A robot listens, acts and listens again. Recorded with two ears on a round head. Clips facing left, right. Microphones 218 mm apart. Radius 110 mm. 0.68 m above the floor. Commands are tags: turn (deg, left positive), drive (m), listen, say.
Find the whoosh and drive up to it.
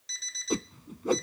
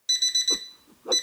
<turn deg="35"/>
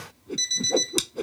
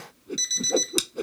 <drive m="1.0"/>
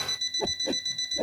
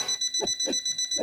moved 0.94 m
<drive m="1.0"/>
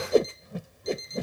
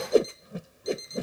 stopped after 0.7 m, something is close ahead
<turn deg="-10"/>
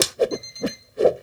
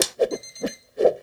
<say>Arrived at the whoosh, straight ahead.</say>